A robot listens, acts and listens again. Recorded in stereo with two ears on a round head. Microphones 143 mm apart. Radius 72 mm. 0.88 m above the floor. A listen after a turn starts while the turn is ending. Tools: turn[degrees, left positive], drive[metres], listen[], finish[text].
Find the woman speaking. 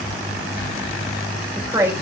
Thought: The woman speaking: about 20° right or 160° right.
Action: turn[-20]
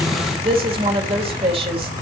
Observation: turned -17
Thought: So it is at 140° right.
Action: turn[-140]
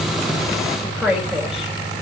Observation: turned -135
Action: finish[Facing the woman speaking.]